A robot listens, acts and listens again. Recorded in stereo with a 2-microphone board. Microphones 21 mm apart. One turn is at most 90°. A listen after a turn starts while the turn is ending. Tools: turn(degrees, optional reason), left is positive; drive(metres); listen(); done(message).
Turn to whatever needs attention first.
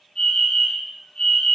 turn(degrees=45, reason="The fire alarm: about 45° left or 135° left.")
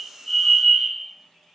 done("Facing the fire alarm, over 4 m away.")